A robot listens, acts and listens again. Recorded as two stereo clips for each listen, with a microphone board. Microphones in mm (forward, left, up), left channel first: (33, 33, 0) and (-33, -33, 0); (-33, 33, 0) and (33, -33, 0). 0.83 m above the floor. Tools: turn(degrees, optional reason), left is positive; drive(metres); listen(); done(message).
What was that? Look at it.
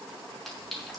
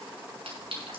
turn(degrees=-45, reason="The clink: 45° right.")
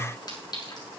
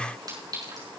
done("Found it: a clink, straight ahead, over 4 m away.")